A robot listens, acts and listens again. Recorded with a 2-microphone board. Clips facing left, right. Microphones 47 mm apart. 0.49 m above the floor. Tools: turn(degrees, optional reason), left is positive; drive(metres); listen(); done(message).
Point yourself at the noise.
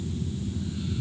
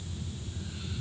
listen()
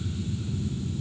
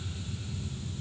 listen()
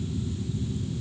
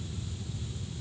done("I can't make out anything to turn to.")